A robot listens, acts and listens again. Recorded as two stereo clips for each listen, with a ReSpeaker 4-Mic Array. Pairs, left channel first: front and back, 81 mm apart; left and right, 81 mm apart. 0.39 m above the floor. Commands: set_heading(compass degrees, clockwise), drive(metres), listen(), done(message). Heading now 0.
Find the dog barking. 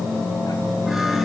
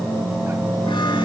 listen()
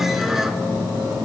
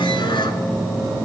listen()
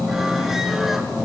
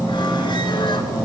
done("I can't make out a dog barking to turn to.")